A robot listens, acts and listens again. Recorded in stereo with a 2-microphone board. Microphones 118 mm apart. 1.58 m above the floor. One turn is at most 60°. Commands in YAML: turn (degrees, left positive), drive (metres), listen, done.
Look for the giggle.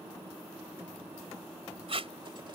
listen: true
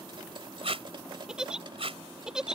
turn: -30
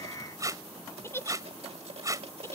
turn: 25
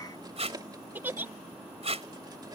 turn: -15
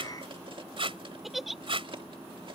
done: "Found it: a giggle, straight ahead."